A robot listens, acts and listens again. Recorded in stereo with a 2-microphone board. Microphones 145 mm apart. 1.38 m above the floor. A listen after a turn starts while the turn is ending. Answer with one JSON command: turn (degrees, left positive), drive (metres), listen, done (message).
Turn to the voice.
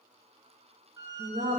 {"turn": -70}
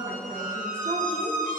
{"listen": true}
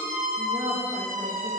{"turn": -35}
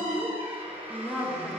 {"done": "Facing the woman speaking."}